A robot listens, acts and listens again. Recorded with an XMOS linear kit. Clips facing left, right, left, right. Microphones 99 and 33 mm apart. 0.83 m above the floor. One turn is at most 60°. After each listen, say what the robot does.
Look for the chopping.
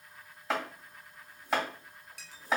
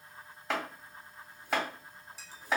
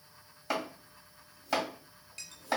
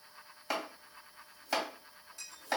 Turn 30° left.
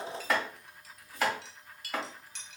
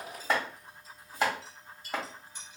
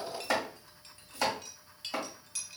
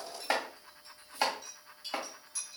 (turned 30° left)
Turn 30° right.
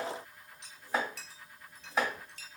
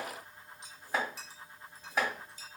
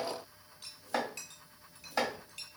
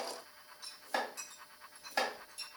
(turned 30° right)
Found it: chopping, straight ahead.